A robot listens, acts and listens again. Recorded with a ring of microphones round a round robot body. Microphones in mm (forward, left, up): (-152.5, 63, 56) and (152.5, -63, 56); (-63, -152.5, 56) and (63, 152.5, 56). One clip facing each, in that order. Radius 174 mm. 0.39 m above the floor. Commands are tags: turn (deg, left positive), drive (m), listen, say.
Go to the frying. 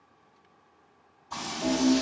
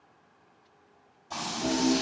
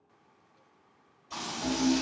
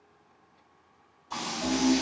<turn deg="-20"/>
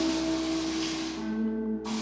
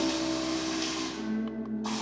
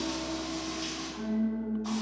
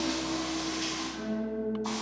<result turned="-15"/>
<drive m="1.0"/>
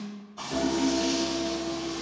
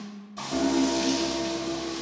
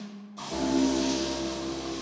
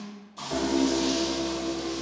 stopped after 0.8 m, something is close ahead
<turn deg="-15"/>
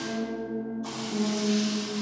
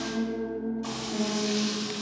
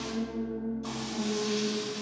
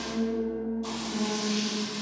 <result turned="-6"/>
<turn deg="-10"/>
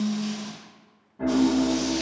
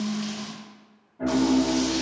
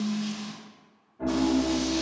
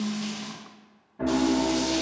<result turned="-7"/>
<listen/>
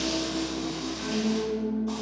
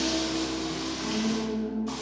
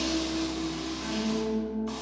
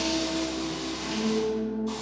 <listen/>
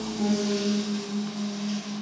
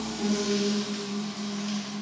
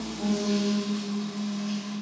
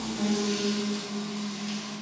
<say>Facing where the frying came from. I can't hear it now. I did not reach it.</say>